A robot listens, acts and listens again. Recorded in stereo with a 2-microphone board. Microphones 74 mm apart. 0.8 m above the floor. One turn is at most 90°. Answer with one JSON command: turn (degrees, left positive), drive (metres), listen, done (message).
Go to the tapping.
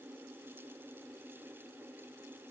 {"listen": true}
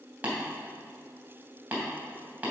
{"turn": -20}
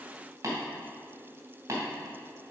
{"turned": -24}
{"turn": -90}
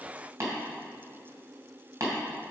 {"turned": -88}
{"turn": -45}
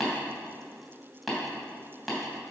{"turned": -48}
{"drive": 1.0}
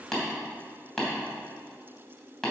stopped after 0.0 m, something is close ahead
{"turn": 10}
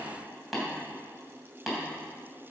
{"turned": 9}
{"done": "Something is in my way. I am facing the tapping but have not reached it."}